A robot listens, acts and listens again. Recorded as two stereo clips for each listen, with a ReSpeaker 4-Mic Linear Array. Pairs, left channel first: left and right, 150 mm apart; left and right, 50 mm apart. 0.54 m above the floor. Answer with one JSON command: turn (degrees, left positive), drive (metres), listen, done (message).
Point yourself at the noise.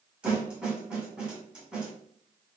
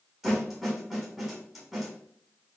{"turn": -30}
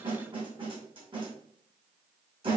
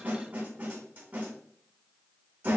{"turn": -145}
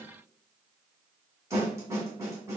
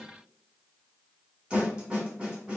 {"turn": -20}
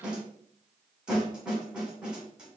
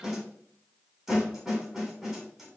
{"done": "Found it: a snare drum, straight ahead."}